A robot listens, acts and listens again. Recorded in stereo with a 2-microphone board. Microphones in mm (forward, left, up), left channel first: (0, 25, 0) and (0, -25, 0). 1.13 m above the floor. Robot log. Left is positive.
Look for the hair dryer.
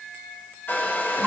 note: The hair dryer: about 45° left or 135° left.
cmd yaw +45
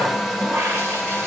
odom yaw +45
end: Facing the hair dryer, 1 to 2 m away.